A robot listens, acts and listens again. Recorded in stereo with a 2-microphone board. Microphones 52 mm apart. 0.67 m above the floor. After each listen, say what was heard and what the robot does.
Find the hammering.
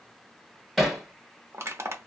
Turn 30° left.
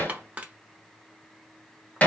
So it is at 150° left. Turn 150° left.
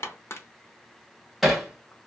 Found it: hammering, straight ahead, 1 to 2 m away.